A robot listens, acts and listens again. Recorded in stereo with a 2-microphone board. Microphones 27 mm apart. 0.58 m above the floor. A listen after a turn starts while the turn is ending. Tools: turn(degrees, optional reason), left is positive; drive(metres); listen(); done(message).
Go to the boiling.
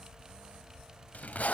listen()
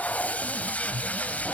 listen()
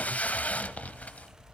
done("I can't make out boiling to turn to.")